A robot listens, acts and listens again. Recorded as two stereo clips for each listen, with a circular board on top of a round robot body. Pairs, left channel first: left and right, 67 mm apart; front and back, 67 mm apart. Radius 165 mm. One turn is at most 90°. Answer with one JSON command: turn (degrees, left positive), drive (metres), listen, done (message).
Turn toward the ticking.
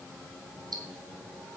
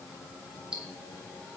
{"turn": -90}
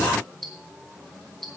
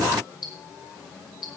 {"done": "Facing the ticking, 2 to 4 m away."}